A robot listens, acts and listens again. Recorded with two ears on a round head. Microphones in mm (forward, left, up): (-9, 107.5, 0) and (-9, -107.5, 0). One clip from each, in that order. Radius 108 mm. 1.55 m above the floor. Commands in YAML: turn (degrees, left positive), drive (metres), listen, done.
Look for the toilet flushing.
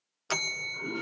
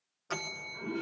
turn: 40
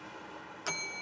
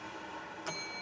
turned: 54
turn: -10
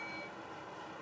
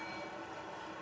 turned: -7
done: "Facing the toilet flushing."